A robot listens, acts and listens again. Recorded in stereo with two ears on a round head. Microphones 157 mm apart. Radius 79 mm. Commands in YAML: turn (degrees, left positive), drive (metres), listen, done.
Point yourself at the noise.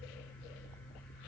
listen: true
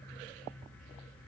listen: true
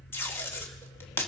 turn: 30
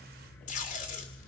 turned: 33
turn: 135
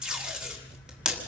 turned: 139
done: "Found it: tape being pulled, straight ahead."